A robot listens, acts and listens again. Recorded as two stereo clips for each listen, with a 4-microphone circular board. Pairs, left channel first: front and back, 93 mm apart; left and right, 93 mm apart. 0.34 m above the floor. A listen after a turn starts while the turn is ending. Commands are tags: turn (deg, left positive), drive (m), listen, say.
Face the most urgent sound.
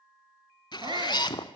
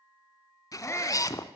<turn deg="150"/>
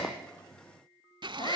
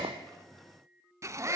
<turn deg="-35"/>
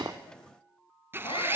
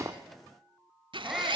<say>Found it: a shout, straight ahead, 2 to 4 m away.</say>